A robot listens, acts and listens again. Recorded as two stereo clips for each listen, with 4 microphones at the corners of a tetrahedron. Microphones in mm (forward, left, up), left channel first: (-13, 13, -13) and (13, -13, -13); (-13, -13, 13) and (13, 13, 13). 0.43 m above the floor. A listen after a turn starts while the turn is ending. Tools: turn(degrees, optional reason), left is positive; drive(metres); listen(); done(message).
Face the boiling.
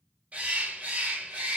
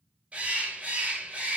listen()
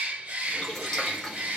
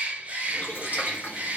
turn(degrees=-150, reason="The boiling: 150° right.")
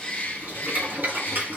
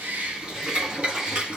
turn(degrees=-20, reason="The boiling is now 20° right.")
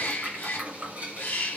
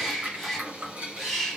turn(degrees=-10, reason="The boiling is now 10° right.")
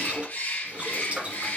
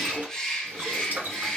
done("Facing the boiling.")